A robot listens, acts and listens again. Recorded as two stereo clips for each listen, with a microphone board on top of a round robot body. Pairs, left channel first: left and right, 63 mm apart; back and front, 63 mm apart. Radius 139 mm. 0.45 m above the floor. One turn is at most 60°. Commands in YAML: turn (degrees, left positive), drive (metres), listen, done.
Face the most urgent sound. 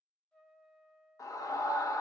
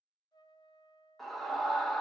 turn: 60
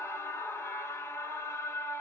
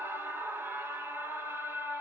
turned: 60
turn: 50
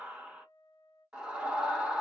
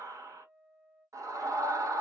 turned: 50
turn: -15
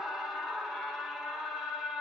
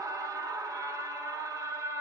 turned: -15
done: "Facing the scream, 1 to 2 m away."